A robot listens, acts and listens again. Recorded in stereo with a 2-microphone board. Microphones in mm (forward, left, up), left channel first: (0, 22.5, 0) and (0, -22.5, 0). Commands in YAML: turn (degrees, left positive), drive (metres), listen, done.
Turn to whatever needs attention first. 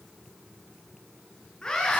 turn: 15
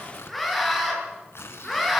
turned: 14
done: "Found it: a scream, straight ahead, over 4 m away."